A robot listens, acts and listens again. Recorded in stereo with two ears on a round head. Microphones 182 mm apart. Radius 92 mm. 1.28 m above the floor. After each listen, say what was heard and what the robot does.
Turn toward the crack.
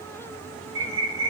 Keep listening.
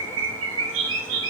Keep listening.
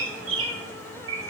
I can't make out a crack, only a bird.